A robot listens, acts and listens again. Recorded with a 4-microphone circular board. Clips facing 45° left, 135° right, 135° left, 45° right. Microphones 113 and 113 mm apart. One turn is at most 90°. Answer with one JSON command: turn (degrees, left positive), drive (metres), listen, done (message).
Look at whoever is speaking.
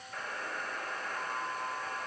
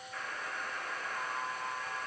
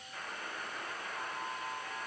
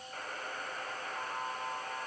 {"listen": true}
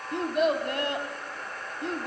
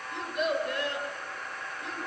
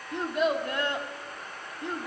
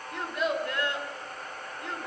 {"turn": 65}
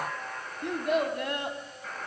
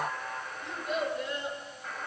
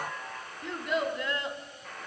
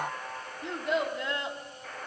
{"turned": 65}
{"turn": 15}
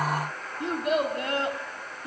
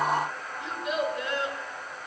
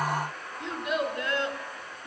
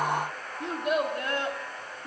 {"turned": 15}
{"done": "Found it: a child speaking, straight ahead."}